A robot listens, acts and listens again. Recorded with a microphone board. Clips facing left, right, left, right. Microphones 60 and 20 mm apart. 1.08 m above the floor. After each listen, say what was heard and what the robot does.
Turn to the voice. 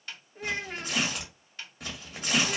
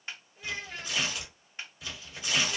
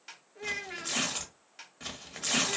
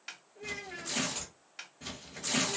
The child speaking: about 45° left or 135° left. Turn 45° left.
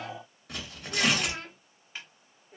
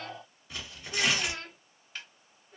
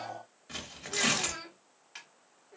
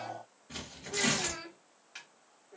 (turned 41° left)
So it is at 15° left. Turn 15° left.
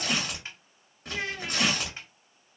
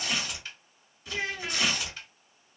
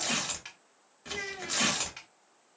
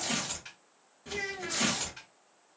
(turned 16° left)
Facing the child speaking.